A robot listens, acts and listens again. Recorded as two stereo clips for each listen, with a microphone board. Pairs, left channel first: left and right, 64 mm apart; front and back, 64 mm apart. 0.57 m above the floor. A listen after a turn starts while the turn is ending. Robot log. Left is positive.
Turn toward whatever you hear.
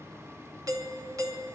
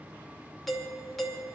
note: The doorbell: 85° right.
cmd yaw -85
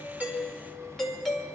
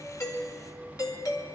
end: Facing the doorbell, 2 to 4 m away.